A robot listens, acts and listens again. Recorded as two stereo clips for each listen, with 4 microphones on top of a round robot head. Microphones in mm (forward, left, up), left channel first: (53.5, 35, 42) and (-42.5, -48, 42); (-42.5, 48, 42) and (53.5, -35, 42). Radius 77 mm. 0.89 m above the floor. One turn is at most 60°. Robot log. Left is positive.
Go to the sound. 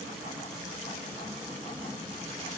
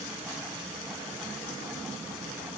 cmd idle
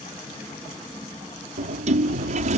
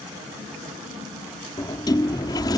note: The sliding door: 165° right.
cmd yaw -60
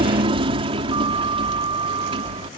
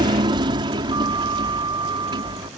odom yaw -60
note: The sliding door is now 95° right.
cmd yaw -60
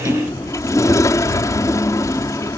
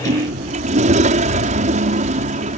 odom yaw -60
note: The sliding door is now 25° right.
cmd yaw -25
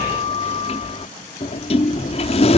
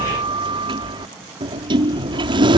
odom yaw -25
cmd fwd 1.0
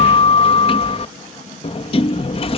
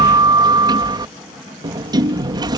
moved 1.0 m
note: The sliding door is now 10° left.
cmd yaw +10
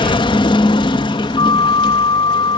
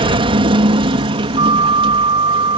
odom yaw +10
cmd fwd 1.0
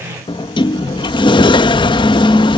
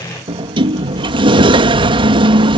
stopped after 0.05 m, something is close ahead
end: Arrived at the sliding door, straight ahead.